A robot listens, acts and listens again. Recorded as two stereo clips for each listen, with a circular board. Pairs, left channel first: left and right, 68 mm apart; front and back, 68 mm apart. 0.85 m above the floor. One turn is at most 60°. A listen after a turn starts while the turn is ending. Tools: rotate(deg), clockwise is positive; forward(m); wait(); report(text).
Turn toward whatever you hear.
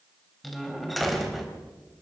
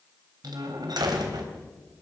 rotate(-60)
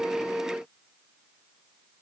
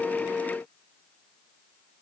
rotate(-60)
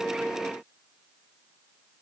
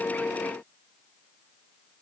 rotate(-60)
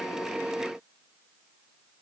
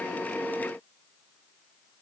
report("I heard a door slam from this way, but can't make it out now.")